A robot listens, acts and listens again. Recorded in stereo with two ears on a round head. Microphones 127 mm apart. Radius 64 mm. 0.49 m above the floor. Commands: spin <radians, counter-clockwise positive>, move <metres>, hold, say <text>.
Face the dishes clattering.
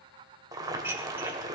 spin -0.52
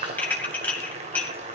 spin 0.17
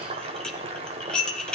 say Found it: dishes clattering, straight ahead, 2 to 4 m away.